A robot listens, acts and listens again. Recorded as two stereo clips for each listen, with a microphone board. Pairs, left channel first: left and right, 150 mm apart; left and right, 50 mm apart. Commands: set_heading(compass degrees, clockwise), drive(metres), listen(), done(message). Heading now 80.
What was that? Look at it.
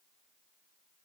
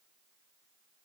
listen()
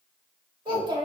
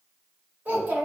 set_heading(110)
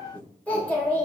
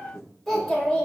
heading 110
set_heading(95)
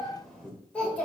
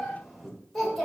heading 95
set_heading(85)
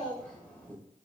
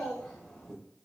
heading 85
set_heading(75)
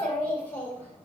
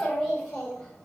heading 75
set_heading(60)
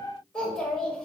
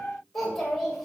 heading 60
done("Facing the child speaking, 2 to 4 m away.")